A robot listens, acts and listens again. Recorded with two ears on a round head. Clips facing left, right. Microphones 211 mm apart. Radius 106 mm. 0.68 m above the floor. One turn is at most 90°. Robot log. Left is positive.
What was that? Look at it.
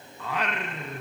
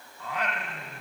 note: The singing: about 55° left or 125° left.
cmd yaw +55
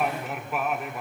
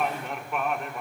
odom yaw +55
end: Facing the singing, 1 to 2 m away.